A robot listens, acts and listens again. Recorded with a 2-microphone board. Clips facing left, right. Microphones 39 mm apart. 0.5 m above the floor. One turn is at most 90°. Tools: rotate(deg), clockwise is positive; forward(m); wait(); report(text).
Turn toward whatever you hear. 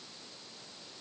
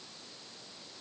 wait()
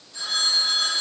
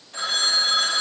rotate(60)
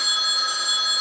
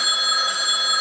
rotate(50)
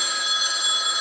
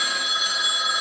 rotate(10)
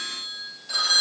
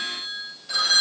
report("Found it: a phone ringing, straight ahead, 1 to 2 m away.")